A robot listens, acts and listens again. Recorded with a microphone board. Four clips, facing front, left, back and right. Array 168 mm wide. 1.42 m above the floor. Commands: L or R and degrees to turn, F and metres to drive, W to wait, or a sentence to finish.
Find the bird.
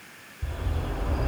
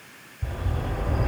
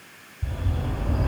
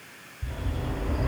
L85
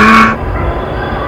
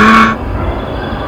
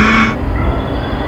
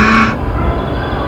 R10
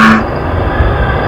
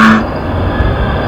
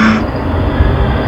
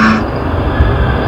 Found it: a bird, straight ahead.